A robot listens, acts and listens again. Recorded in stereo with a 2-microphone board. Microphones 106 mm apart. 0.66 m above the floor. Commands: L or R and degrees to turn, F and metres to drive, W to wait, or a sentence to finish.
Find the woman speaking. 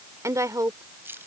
R35
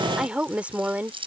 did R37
R15
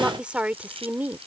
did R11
R15
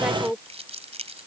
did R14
R10
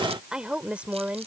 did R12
R15
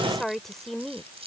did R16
Facing the woman speaking.